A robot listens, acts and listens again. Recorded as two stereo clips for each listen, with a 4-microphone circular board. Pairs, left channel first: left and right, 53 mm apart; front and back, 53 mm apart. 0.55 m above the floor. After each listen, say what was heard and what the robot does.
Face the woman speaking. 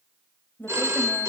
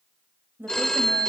The woman speaking: 135° left. Turn 135° left.
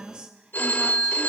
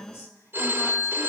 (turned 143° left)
The woman speaking is now 20° right. Turn 20° right.
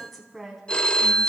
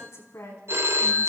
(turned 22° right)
Facing the woman speaking, 2 to 4 m away.